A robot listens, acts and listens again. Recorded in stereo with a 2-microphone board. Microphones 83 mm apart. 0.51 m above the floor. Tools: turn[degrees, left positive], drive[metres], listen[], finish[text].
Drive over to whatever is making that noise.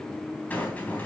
Thought: The rattle: about 20° left or 160° left.
Action: turn[20]
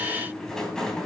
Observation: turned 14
Action: drive[1.0]
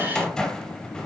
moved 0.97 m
Thought: The rattle is now 10° left.
Action: turn[10]
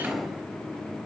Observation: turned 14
Action: drive[1.0]
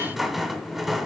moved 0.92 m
Action: drive[1.0]
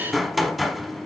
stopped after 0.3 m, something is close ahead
Action: finish[I am next to the rattle.]